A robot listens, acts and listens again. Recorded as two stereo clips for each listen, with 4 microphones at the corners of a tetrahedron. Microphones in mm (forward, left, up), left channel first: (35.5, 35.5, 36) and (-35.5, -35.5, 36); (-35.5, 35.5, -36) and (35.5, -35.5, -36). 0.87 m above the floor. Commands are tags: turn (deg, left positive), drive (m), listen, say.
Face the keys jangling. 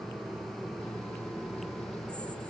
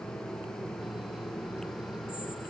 <listen/>
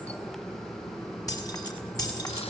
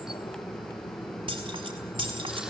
<turn deg="-10"/>
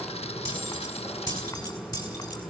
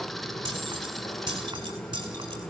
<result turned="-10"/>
<say>Facing the keys jangling, over 4 m away.</say>